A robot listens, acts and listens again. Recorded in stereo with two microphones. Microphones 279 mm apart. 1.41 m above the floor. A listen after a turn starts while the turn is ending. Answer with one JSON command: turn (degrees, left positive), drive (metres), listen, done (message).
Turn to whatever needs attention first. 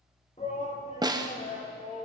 {"turn": 25}
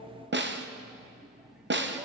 {"listen": true}
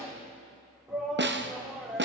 {"done": "Facing the shout."}